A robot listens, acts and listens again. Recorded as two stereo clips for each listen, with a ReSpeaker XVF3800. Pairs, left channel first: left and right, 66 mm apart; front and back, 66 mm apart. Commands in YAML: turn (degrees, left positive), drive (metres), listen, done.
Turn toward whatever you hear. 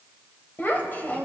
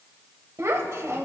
turn: 145
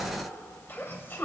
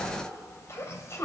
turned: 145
turn: 35
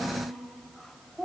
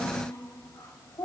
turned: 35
done: "Found it: a child speaking, straight ahead."